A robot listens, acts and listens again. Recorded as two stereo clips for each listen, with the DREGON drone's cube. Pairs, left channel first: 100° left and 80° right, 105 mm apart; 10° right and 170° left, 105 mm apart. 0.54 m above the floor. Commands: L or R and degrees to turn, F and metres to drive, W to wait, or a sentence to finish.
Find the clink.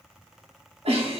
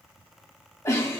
W
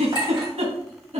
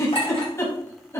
R35
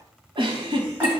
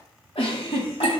W
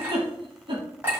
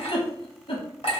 Found it: a clink, straight ahead, 2 to 4 m away.